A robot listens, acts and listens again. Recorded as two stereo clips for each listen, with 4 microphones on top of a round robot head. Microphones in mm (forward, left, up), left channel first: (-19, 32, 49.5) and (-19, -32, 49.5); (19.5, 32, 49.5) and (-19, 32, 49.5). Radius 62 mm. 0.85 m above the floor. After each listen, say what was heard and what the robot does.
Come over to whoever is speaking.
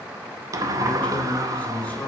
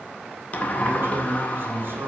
The man speaking: 160° left. Turn 160° left.
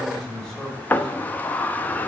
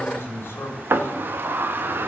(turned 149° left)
The man speaking is now 10° left. Turn 10° left.
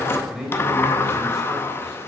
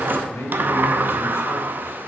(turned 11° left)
Drive 1.0 m forward.
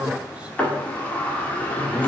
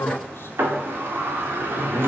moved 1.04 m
The man speaking is now 15° right. Turn 15° right.
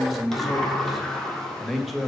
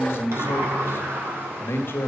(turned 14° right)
Drive 1.0 m forward.
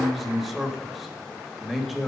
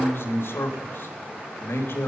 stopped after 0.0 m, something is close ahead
Arrived at the man speaking, straight ahead.